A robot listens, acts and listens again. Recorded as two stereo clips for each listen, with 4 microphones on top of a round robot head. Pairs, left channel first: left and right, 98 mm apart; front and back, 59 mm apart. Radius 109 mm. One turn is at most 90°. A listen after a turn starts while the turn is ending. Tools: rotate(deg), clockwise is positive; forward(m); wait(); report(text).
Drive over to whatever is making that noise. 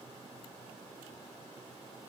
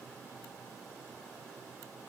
wait()
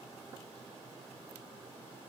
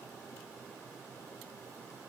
wait()
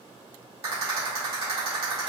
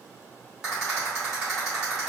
rotate(90)
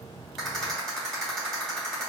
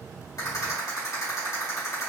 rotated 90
forward(1.0)
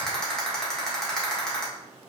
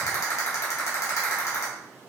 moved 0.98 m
forward(1.0)
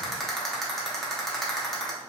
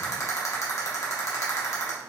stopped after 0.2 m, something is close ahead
report("I am next to the rattle.")